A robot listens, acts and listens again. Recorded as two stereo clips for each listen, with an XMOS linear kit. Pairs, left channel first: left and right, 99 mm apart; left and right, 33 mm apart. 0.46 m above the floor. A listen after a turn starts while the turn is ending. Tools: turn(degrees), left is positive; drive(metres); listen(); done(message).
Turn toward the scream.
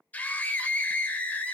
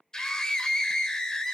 turn(degrees=15)
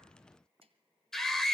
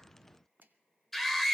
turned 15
done("Found it: a scream, straight ahead, 1 to 2 m away.")